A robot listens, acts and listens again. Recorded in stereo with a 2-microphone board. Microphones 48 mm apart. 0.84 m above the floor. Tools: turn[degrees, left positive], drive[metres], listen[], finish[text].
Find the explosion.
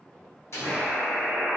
Thought: The explosion: about 70° left or 110° left.
Action: turn[70]
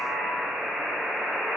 Action: listen[]
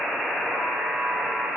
Action: finish[I heard an explosion, but can't make it out now. It was about straight ahead or 40° left.]